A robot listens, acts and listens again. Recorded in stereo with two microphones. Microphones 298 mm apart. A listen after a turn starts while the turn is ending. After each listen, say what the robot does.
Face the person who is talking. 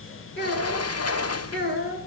Turn 35° left.
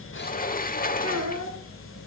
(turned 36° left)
Turn 110° left.
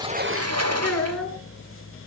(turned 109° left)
Found it: a child speaking, straight ahead.